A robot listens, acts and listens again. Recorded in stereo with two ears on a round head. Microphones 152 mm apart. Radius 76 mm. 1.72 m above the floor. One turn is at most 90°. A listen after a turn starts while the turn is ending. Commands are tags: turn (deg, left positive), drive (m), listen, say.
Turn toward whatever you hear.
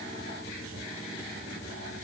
<listen/>
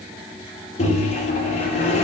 <turn deg="40"/>
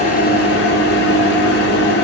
<turn deg="90"/>
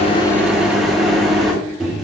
<say>Found it: a microwave, straight ahead.</say>